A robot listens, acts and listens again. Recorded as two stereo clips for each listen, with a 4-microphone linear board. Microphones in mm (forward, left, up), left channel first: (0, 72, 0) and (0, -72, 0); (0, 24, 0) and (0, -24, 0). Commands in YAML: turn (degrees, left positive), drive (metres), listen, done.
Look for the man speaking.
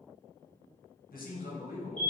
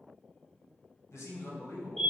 turn: 70
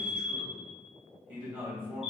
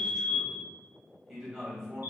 turn: -15
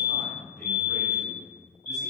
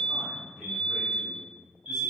done: "Facing the man speaking, 2 to 4 m away."